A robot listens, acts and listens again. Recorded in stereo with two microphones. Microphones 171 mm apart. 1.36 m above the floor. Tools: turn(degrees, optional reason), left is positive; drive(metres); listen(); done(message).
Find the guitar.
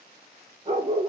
listen()
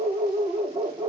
listen()
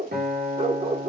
turn(degrees=-70, reason="The guitar: about 70° right or 110° right.")
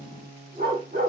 turn(degrees=-35, reason="So it is at 35° right.")
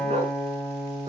done("Found it: a guitar, straight ahead, 2 to 4 m away.")